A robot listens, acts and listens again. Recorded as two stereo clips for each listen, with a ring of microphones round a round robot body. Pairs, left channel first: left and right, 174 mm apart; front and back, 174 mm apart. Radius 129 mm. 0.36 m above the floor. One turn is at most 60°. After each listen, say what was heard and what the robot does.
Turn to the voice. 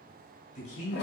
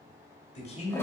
The man speaking: 50° left. Turn 50° left.
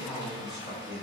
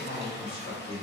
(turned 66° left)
Found it: a man speaking, straight ahead.